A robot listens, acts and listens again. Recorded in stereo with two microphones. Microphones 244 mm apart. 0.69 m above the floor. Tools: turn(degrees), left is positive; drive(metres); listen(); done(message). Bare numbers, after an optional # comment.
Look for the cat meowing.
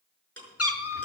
# The cat meowing: about 75° left or 105° left.
turn(75)
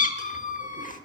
# So it is at 35° left.
turn(35)
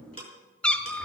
done("Found it: a cat meowing, straight ahead, under 1 m away.")